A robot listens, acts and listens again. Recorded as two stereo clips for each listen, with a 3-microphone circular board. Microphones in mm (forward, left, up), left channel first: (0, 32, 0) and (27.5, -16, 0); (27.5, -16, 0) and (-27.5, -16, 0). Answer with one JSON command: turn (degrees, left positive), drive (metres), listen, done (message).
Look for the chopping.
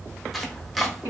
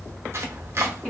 {"turn": -150}
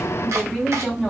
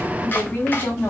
{"listen": true}
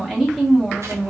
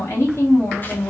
{"listen": true}
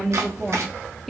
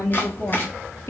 {"turn": -50}
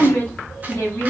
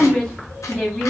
{"listen": true}
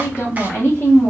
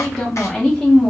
{"listen": true}
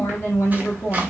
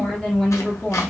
{"done": "I heard chopping from this way, but can't make it out now."}